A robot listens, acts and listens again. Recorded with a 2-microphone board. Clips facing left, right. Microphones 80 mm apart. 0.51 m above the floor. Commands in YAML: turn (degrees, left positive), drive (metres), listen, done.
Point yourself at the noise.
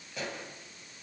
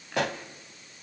turn: -70
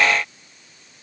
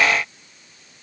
listen: true
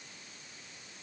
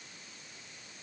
done: "I heard a pop, but can't make it out now. It was about straight ahead or 40° right."